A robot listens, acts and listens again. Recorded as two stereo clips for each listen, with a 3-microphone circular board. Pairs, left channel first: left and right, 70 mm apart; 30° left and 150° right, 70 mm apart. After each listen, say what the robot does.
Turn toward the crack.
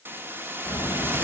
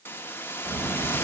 Turn 155° left.
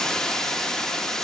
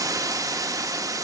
Facing where the crack came from. I can't hear it now.